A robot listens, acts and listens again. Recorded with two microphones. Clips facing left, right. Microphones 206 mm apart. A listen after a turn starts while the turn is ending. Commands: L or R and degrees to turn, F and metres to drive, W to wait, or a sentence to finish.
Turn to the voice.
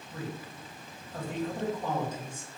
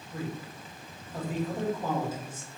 R30
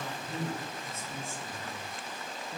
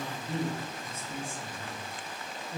R145
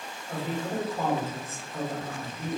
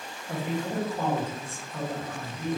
Facing the man speaking, 1 to 2 m away.